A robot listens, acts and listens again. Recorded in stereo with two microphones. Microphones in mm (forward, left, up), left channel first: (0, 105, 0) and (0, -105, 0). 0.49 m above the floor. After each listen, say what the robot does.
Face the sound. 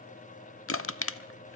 Turn 75° left.
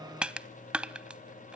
Facing the crushing.